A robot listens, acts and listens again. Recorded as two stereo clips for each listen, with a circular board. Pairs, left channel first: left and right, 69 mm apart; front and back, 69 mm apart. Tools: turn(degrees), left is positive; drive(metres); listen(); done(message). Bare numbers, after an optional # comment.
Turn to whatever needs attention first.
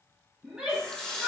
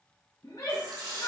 # The shout: 15° right.
turn(-15)
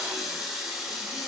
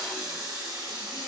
listen()
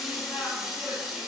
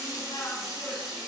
listen()
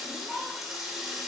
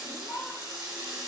done("Facing the shout.")